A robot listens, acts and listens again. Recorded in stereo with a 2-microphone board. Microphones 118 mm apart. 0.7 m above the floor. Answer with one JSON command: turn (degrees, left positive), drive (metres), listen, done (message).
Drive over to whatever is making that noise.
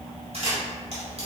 {"turn": -60}
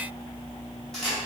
{"drive": 1.0}
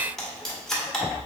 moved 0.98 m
{"drive": 1.0}
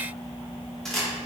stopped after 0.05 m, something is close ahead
{"done": "I am next to the camera shutter."}